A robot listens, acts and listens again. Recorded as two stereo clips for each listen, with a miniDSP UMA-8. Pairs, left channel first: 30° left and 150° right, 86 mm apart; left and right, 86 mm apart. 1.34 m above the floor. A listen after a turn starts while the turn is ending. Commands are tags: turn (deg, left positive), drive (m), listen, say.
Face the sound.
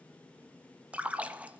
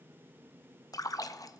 <turn deg="135"/>
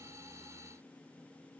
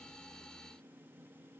<say>Facing where the splash came from. I can't hear it now.</say>